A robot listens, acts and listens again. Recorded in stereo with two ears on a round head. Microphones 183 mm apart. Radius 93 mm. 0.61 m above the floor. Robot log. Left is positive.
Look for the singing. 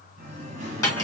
note: The singing: about 35° right or 145° right.
cmd yaw -35
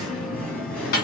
end: Facing the singing, 2 to 4 m away.